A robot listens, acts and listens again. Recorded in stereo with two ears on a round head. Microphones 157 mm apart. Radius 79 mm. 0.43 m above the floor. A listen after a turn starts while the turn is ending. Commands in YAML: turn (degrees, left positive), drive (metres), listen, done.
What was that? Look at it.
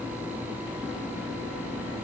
listen: true
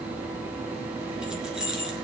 turn: -30
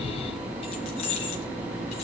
turn: 35
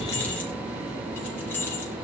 turn: 10
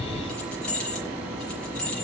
done: "Facing the keys jangling, over 4 m away."